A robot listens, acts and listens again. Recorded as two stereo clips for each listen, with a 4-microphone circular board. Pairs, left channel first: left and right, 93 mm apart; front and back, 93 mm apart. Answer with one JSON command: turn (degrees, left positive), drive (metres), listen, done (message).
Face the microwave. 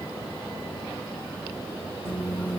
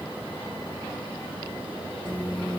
{"turn": 65}
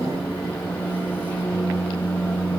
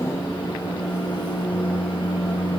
{"turn": 20}
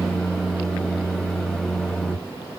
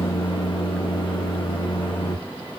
{"done": "Found it: a microwave, straight ahead."}